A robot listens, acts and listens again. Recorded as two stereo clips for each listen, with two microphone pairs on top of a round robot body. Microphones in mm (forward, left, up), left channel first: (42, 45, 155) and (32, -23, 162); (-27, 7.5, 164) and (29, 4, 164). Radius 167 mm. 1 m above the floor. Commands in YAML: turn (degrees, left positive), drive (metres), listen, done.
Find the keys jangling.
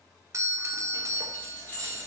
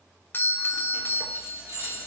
turn: 10
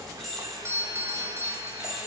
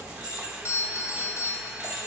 turn: -15
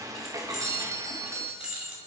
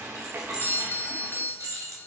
turn: -25
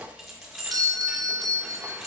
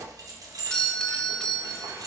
turn: -10
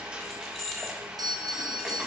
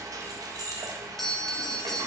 done: "Facing the keys jangling, 1 to 2 m away."